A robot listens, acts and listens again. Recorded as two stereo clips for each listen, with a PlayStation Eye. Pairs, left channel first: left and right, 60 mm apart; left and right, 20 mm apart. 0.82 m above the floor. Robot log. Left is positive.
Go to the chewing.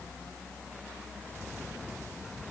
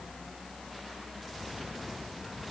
cmd idle
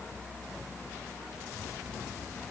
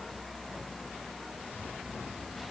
cmd idle
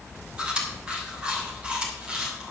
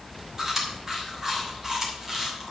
note: The chewing: about 20° right or 160° right.
cmd yaw -20
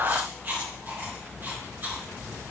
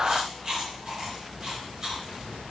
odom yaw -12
note: So it is at 150° right.
cmd yaw -150
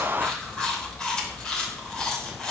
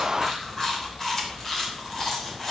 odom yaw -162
note: The chewing is now 15° left.
cmd yaw +15
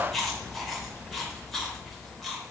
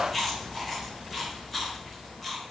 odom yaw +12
cmd fwd 1.0
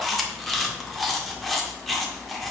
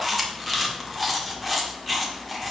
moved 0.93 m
cmd fwd 1.0
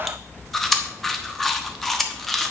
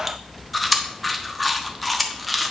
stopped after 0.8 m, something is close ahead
end: I am next to the chewing.